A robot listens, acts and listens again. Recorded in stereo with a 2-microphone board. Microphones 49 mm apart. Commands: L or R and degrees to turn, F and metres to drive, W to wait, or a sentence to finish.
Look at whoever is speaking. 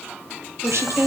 R70
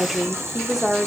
R10
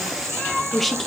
Facing the woman speaking.